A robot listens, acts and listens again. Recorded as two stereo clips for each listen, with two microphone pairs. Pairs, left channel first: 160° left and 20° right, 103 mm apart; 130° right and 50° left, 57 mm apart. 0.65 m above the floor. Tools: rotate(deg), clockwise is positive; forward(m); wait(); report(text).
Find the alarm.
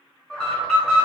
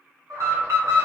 rotate(-75)
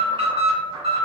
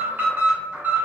report("Found it: an alarm, straight ahead, 1 to 2 m away.")